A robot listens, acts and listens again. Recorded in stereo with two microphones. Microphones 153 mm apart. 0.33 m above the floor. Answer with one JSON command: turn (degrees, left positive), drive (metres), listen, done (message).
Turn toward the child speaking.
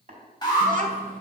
{"turn": -60}
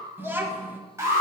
{"turn": -15}
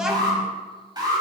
{"done": "Facing the child speaking, 1 to 2 m away."}